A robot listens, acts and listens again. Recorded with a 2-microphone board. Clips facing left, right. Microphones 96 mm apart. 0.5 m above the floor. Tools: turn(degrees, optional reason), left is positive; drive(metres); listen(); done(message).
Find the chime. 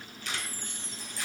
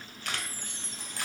turn(degrees=30)
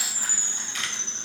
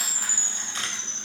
turn(degrees=140, reason="So it is at 140° left.")
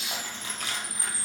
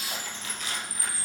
turn(degrees=30, reason="The chime is now 30° left.")
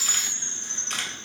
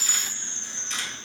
done("Facing the chime, 2 to 4 m away.")